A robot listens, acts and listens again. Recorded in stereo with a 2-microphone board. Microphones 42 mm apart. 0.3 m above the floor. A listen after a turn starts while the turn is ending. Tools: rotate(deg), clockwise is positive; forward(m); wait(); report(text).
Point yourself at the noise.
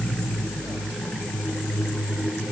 wait()
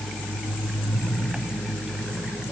wait()
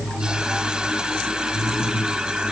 report("I can't make out anything to turn to.")